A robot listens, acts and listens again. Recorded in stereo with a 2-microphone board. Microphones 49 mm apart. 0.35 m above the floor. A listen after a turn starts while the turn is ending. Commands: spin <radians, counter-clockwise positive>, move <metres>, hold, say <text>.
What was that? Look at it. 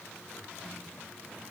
hold
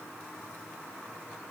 hold
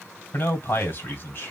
spin 0.96
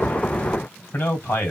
spin 0.87
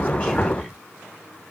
say Facing the man speaking, 2 to 4 m away.